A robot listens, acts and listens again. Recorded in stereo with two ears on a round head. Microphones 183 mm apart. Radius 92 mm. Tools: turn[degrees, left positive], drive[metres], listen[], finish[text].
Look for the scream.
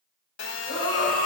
Thought: The scream: about 50° left or 130° left.
Action: turn[50]
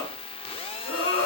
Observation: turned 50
Thought: So it is at 75° left.
Action: turn[75]
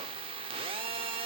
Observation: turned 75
Action: listen[]
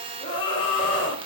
Thought: The scream is now 20° left.
Action: turn[20]
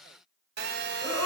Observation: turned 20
Action: finish[Facing the scream.]